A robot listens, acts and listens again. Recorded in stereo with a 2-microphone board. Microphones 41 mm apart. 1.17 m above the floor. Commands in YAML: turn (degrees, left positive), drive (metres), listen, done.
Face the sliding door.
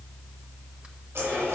listen: true
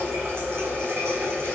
listen: true
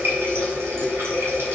done: "I can't make out a sliding door, only a running tap."